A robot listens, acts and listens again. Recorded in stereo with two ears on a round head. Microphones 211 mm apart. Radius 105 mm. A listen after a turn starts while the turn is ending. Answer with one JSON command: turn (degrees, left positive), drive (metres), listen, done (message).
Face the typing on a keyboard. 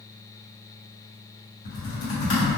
{"turn": 55}
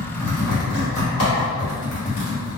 {"turn": 65}
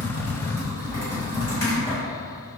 {"turn": 15}
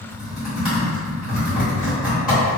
{"done": "Facing the typing on a keyboard."}